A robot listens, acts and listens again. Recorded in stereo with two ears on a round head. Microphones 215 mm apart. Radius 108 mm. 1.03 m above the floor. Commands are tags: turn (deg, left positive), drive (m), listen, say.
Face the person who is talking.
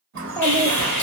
<turn deg="30"/>
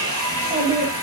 <turn deg="-20"/>
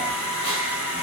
<listen/>
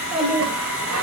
<say>Facing the child speaking.</say>